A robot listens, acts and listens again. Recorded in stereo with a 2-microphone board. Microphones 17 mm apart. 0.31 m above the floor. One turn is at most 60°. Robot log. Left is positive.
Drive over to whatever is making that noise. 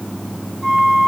cmd yaw -30
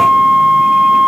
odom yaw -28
note: So it is at 145° right.
cmd yaw -60
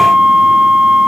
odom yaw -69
note: The flute is now 75° right.
cmd yaw -60
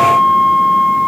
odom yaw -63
note: The flute is now 15° right.
cmd yaw -15
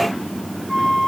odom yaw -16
cmd fwd 1.0
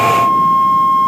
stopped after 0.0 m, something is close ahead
end: Blocked. The flute is further on, straight ahead.